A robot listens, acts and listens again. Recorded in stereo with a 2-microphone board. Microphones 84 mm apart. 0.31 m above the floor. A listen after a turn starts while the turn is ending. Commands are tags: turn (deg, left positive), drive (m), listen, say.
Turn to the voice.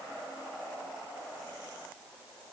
<listen/>
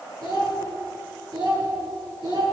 <turn deg="-70"/>
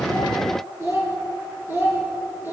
<turn deg="-25"/>
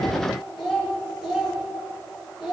<say>Facing the child speaking, 2 to 4 m away.</say>